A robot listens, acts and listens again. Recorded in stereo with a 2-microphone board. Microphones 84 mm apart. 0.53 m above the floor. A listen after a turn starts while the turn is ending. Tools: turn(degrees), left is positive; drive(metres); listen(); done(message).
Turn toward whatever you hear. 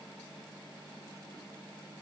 listen()
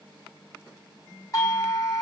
turn(degrees=45)
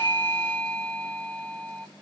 turn(degrees=15)
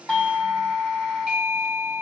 done("Facing the doorbell.")